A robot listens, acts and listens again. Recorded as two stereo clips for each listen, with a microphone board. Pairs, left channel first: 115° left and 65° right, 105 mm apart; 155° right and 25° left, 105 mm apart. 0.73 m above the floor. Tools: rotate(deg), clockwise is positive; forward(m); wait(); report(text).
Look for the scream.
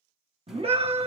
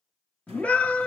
rotate(80)
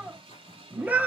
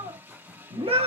report("Found it: a scream, straight ahead, 1 to 2 m away.")